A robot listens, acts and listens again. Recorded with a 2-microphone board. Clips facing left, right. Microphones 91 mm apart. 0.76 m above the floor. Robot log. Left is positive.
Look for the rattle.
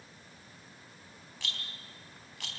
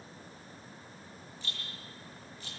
cmd yaw +90
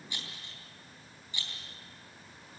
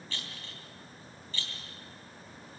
note: So it is at 15° left.
cmd yaw +15
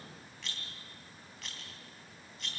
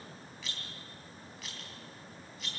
end: Found it: a rattle, straight ahead, 2 to 4 m away.